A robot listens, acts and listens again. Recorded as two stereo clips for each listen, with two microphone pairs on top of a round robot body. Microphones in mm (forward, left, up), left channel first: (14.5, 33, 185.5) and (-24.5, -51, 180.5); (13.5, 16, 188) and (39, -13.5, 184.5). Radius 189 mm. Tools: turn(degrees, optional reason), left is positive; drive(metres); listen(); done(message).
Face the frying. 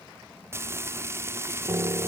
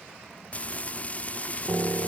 turn(degrees=-175, reason="The frying: 175° right.")
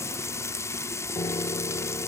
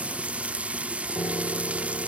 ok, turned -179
done("Found it: frying, straight ahead.")